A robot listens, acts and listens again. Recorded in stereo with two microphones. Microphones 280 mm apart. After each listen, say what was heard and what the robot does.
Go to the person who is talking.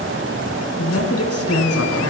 The man speaking: about 60° left or 120° left. Turn 60° left.
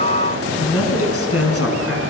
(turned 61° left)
So it is at 55° left. Turn 55° left.
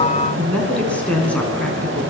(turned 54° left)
Drive 1.0 m forward.
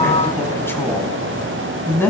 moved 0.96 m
The man speaking is now 10° left. Turn 10° left.
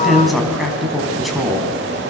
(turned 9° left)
Drive 1.0 m forward.
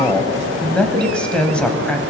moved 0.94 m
Drive 1.0 m forward.
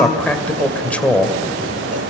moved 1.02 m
Drive 1.0 m forward.
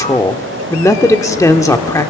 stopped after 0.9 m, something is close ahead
The man speaking is now 15° left. Turn 15° left.
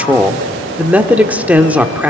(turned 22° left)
I am next to the man speaking.